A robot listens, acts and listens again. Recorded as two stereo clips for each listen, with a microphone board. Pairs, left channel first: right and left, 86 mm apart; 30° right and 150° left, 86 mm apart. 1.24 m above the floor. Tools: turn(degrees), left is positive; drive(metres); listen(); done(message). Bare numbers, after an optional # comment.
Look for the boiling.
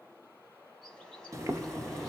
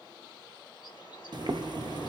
# The boiling: 135° left.
turn(135)
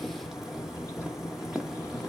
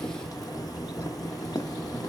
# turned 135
done("Facing the boiling, under 1 m away.")